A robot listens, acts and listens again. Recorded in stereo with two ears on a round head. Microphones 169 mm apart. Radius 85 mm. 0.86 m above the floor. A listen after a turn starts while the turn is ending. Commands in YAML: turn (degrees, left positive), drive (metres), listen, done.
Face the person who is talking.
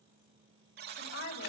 turn: 90
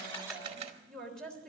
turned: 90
done: "Facing the woman speaking."